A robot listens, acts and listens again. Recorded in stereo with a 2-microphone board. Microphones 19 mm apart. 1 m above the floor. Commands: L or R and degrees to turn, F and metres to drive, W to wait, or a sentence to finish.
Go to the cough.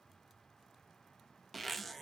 W
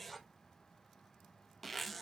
W
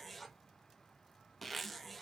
I can't make out a cough, only a zipper.